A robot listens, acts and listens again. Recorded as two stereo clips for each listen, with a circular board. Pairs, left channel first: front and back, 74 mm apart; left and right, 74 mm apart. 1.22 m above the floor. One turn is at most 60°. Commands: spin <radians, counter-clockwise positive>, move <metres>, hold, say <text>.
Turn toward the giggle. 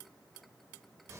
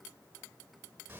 hold
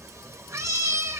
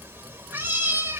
hold
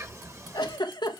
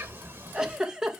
spin -0.17
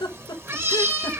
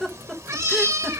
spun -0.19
say Found it: a giggle, straight ahead, 1 to 2 m away.